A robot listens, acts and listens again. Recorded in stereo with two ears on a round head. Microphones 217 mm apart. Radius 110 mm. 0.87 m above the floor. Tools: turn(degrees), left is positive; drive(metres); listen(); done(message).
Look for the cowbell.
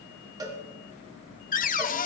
turn(degrees=-15)
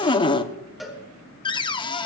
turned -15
done("Facing the cowbell.")